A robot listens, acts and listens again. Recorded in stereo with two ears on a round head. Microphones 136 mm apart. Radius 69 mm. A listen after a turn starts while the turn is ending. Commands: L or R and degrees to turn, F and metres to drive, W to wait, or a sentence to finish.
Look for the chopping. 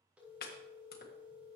L60
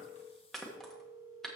Found it: chopping, straight ahead.